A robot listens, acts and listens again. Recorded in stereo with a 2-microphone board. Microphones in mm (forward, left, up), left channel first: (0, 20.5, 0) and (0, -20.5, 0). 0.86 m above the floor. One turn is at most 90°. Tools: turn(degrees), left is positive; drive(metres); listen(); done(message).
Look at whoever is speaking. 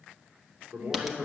turn(degrees=-70)
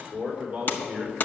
turn(degrees=-25)
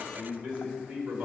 turn(degrees=-25)
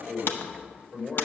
turn(degrees=20)
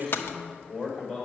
done("Found it: a man speaking, straight ahead, over 4 m away.")